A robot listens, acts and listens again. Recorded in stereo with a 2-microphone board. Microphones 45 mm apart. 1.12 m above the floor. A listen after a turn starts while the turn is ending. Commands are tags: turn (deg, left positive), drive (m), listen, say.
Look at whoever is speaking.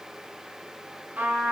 <listen/>
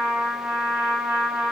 <listen/>
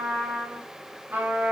<say>I can't make out anyone speaking to turn to.</say>